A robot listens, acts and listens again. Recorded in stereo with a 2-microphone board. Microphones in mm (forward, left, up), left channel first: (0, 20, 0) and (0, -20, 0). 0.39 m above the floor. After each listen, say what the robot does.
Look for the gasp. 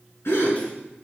Turn 90° left.
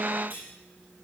I heard a gasp from this way, but can't make it out now.